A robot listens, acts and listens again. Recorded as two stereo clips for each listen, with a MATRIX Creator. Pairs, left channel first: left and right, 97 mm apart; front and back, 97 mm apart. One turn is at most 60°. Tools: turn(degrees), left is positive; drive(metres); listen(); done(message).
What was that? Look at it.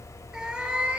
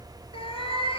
turn(degrees=-15)
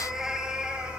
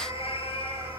turn(degrees=-10)
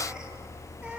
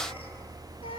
listen()
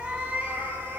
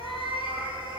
turn(degrees=-15)
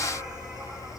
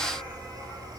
listen()
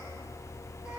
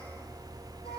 listen()
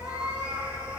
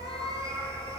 turn(degrees=-15)
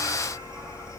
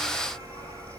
listen()
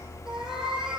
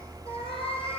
done("Facing the cat meowing, over 4 m away.")